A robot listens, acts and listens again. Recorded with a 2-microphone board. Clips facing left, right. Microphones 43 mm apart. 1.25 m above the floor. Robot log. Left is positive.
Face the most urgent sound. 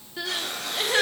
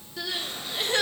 note: The crying: about 20° left or 160° left.
cmd yaw +20
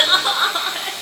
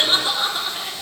note: So it is at 140° left.
cmd yaw +140
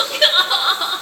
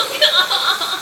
end: Facing the crying.